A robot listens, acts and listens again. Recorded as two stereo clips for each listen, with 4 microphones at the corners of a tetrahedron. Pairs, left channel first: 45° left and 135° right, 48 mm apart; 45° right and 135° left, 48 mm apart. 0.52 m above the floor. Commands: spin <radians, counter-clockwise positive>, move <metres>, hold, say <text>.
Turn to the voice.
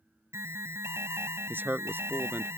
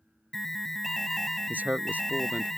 spin -3.05
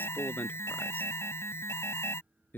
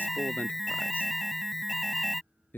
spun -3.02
say Found it: a man speaking, straight ahead.